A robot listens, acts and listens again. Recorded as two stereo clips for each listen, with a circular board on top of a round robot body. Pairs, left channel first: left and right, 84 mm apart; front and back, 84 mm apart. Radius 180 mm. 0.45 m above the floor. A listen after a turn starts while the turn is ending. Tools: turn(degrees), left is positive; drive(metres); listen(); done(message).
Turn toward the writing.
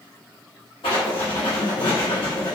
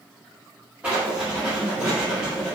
turn(degrees=100)
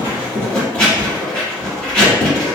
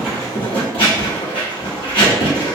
turn(degrees=15)
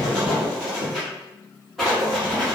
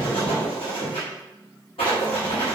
done("Found it: writing, straight ahead.")